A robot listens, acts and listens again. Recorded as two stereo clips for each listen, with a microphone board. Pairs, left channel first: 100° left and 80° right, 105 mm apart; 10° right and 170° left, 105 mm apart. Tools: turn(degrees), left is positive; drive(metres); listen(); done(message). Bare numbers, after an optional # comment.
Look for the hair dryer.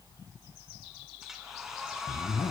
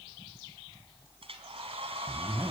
# The hair dryer: 165° right.
turn(-165)
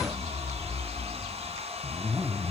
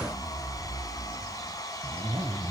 # The hair dryer is now 65° right.
turn(-65)
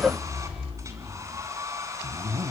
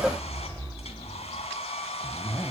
# The hair dryer is now 20° right.
turn(-20)
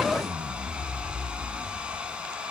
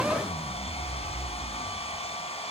done("Found it: a hair dryer, straight ahead.")